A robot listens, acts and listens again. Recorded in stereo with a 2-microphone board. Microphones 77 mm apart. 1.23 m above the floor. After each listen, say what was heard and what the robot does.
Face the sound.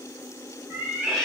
Turn 30° left.
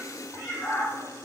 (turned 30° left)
So it is at 140° left. Turn 140° left.
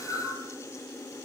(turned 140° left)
The cat meowing is now 50° right. Turn 50° right.
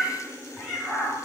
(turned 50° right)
Found it: a cat meowing, straight ahead, over 4 m away.